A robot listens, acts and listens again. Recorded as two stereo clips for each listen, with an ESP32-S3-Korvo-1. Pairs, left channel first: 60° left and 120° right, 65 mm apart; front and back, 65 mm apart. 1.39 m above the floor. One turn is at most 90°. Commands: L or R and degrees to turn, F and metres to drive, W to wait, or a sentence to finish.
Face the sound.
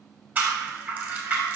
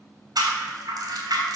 L90
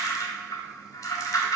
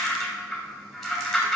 L90
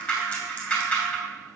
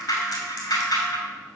Facing the rattle, 2 to 4 m away.